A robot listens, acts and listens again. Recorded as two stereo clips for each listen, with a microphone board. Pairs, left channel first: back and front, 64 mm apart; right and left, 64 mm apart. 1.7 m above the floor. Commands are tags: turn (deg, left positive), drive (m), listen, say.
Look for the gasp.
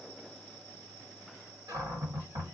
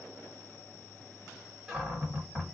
<listen/>
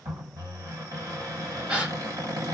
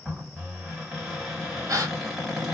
<turn deg="70"/>
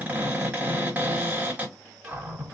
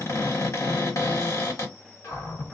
<say>Facing where the gasp came from. I can't hear it now.</say>